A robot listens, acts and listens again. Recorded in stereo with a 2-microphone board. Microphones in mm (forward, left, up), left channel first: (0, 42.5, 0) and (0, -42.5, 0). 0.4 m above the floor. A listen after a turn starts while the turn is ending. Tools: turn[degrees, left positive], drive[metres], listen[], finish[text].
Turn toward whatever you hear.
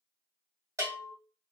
Thought: The bell: about 35° right or 145° right.
Action: turn[-35]
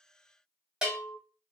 Action: finish[Found it: a bell, straight ahead, 1 to 2 m away.]